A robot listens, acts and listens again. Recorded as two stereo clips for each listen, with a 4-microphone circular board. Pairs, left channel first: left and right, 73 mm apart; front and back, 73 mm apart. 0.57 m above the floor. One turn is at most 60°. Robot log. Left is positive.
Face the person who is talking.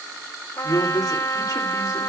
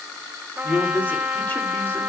note: The man speaking: 60° left.
cmd yaw +60
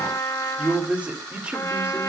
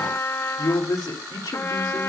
note: The man speaking is now 20° right.
cmd yaw -20
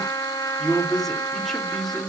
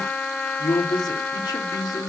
end: Found it: a man speaking, straight ahead, 2 to 4 m away.